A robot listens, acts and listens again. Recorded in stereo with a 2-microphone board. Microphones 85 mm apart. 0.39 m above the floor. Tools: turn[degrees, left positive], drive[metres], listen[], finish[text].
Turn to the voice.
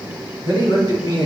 Thought: The man speaking: about 60° left or 120° left.
Action: turn[60]
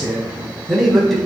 Action: finish[Found it: a man speaking, straight ahead.]